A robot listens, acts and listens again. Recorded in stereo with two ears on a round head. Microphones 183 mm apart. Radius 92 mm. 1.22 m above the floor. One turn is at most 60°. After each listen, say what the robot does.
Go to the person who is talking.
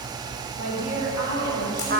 Turn 60° right.
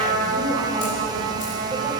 Turn 30° right.
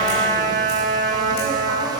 Keep listening.
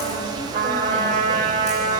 I heard a woman speaking from this way, but can't make it out now. I did not reach it.